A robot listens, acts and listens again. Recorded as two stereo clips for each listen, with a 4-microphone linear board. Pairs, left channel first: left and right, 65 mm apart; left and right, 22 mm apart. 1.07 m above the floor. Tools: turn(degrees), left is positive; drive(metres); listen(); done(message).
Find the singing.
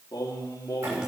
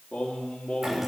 turn(degrees=75)
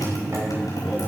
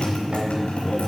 listen()
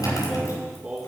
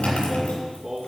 turn(degrees=-20)
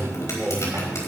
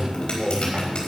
done("Found it: singing, straight ahead.")